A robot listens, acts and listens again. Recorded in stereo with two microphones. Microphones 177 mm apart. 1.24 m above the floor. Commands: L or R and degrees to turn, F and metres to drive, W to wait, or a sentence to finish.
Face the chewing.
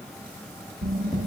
L45
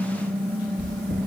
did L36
L100
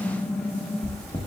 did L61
L40
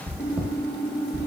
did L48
R10
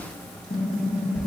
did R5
Facing the chewing.